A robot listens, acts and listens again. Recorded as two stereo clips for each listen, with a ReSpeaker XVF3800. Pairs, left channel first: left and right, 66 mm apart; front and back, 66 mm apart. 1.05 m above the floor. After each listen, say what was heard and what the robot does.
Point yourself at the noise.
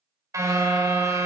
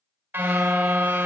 The car horn: 125° right. Turn 125° right.
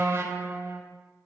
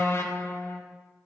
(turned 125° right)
The car horn is now 45° right. Turn 45° right.
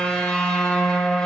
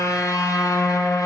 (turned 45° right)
The car horn is now 10° left. Turn 10° left.
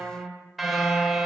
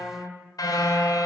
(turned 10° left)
Facing the car horn, 2 to 4 m away.